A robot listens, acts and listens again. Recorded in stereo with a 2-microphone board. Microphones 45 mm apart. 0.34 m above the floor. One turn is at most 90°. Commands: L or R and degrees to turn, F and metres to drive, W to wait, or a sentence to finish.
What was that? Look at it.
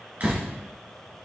R35
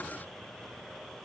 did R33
W
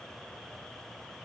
I heard a door slam, but can't make it out now. It was about 5° right or 110° right.